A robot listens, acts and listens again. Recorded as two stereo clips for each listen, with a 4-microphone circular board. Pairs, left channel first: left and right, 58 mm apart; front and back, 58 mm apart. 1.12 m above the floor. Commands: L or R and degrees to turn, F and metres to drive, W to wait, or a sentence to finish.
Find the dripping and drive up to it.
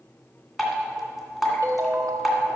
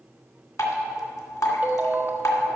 F1.0
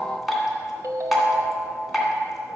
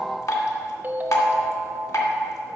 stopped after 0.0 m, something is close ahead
Blocked. The dripping is further on, straight ahead.